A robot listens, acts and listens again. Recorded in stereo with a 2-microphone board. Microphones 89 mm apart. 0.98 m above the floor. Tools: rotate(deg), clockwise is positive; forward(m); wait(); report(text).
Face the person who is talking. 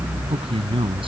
rotate(90)
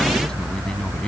rotate(-10)
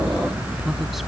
wait()
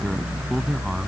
wait()
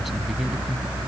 report("Facing where the man speaking came from. I can't hear it now.")